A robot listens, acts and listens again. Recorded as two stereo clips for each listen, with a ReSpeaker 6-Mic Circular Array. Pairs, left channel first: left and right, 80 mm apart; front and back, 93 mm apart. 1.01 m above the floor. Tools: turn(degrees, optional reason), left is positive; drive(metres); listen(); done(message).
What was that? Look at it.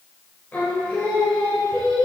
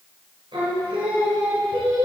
turn(degrees=165, reason="The singing: 165° left.")
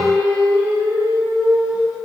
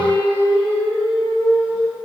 turn(degrees=-15, reason="The singing is now 15° right.")
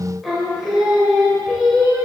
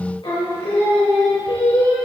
done("Facing the singing.")